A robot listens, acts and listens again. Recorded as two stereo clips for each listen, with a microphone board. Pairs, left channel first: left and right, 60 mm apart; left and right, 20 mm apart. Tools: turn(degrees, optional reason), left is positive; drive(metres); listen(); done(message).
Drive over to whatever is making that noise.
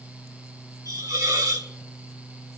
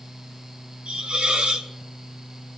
turn(degrees=-90)
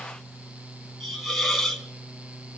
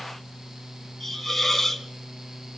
drive(metres=1.0)
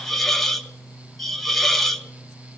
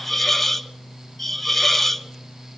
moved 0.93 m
drive(metres=1.0)
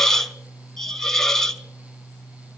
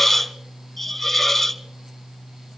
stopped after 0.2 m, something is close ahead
done("I am next to the hiss.")